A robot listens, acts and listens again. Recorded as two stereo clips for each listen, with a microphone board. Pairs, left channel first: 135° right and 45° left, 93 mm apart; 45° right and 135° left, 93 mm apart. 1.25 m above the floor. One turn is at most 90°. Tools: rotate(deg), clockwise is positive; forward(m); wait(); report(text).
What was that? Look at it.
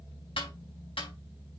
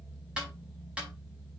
rotate(90)
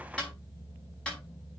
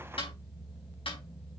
rotate(55)
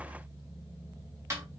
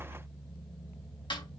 rotate(10)
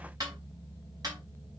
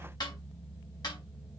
report("Facing the snare drum, over 4 m away.")